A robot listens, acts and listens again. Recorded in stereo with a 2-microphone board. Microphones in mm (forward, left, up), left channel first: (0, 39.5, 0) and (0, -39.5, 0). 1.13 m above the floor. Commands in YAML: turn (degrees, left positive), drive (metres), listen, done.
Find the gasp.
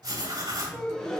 turn: 30
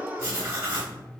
turn: -25
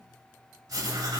done: "I heard a gasp from this way, but can't make it out now."